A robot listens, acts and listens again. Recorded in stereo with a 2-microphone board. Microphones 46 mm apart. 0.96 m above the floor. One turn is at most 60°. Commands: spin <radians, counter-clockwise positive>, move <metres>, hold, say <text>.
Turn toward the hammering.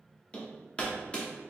spin 0.44
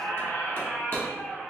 hold
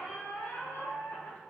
hold
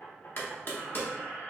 spin 1.05
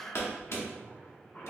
spin 1.05
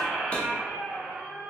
spin 0.26
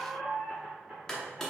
spin 0.17
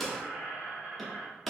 say Found it: hammering, straight ahead, 1 to 2 m away.